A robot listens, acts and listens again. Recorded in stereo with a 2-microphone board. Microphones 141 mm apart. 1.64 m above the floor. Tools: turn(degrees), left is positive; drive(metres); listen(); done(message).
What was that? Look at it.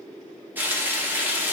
turn(degrees=-30)
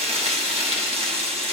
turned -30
turn(degrees=-135)
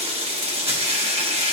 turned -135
turn(degrees=-45)
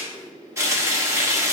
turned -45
turn(degrees=-20)
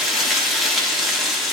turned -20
done("Facing the frying.")